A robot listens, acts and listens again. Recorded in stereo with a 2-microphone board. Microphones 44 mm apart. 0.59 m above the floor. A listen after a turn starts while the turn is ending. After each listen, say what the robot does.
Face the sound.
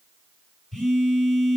Turn 30° left.
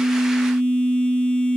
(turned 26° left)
Turn 140° left.
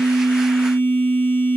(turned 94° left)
Turn 45° left.
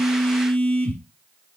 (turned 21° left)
Turn 25° left.
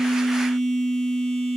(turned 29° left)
Found it: a phone buzzing, straight ahead, 2 to 4 m away.